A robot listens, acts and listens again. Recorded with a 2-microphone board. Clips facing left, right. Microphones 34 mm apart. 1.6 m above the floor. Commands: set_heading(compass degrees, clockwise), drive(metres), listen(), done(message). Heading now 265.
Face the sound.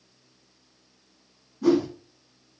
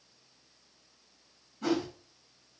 set_heading(320)
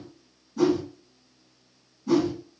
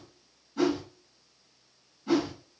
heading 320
set_heading(15)
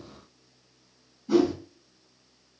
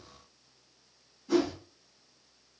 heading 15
done("Facing the whoosh, 1 to 2 m away.")